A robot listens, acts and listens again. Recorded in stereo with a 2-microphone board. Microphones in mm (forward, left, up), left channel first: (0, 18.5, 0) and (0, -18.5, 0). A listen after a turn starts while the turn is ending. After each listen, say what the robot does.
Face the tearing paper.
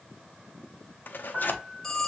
Turn 60° left.
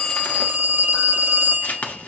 Turn 55° left.
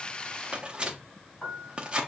Turn 30° right.
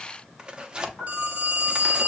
Turn 25° right.
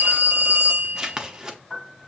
Turn 20° right.
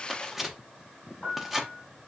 Found it: tearing paper, straight ahead, under 1 m away.